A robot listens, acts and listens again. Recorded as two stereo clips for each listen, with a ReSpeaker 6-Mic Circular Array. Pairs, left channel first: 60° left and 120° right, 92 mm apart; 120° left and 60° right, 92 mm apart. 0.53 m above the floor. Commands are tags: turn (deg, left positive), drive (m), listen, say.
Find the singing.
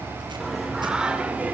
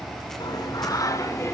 <turn deg="170"/>
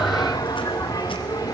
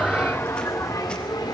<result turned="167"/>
<turn deg="90"/>
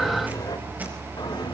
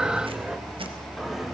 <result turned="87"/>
<turn deg="25"/>
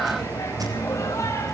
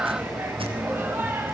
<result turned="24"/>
<say>Found it: singing, straight ahead.</say>